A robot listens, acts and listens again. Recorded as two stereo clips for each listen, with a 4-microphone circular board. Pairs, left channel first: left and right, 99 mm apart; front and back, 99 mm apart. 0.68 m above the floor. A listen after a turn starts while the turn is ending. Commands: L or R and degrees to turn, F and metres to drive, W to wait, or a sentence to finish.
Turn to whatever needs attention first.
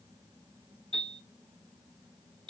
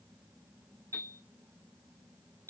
W
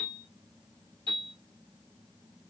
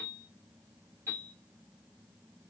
W
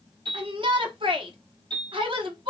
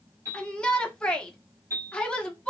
R80
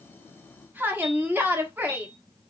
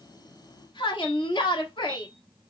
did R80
R25
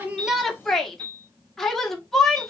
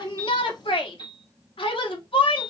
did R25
Facing the shout.